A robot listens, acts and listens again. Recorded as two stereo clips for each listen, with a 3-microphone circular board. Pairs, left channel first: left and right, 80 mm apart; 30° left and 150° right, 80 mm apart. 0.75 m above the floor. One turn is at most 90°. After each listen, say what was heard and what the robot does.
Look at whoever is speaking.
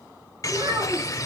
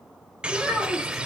The child speaking: 60° right. Turn 60° right.
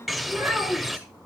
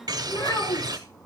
The child speaking is now 15° right. Turn 15° right.
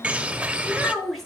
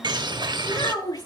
Found it: a child speaking, straight ahead.